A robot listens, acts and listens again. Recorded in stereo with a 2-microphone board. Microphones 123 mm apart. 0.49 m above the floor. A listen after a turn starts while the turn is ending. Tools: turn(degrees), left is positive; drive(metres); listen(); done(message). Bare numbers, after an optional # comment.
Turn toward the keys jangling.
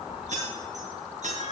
# The keys jangling: about 75° right or 105° right.
turn(-75)
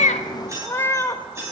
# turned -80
# So it is at 20° right.
turn(-20)
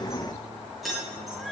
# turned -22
done("Facing the keys jangling, over 4 m away.")